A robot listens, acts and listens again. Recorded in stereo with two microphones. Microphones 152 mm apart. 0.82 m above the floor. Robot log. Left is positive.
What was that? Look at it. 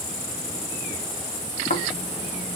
note: The snoring: about 65° left or 115° left.
cmd yaw +65
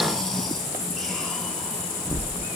end: Facing the snoring.